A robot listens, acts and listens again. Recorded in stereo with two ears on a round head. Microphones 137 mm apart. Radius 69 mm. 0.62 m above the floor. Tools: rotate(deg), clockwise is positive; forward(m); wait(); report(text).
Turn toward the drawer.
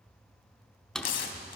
rotate(-30)
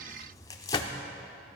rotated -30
rotate(-145)
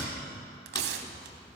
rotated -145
rotate(-25)
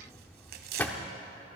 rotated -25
rotate(-15)
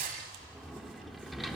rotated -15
report("Found it: a drawer, straight ahead.")